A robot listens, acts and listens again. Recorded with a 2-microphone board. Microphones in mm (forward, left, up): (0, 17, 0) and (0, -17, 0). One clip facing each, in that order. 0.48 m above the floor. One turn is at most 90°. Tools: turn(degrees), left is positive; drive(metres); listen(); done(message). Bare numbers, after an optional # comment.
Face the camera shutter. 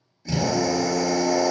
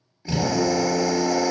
listen()
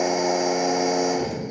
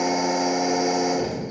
listen()
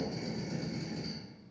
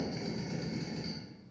done("I can't make out a camera shutter to turn to.")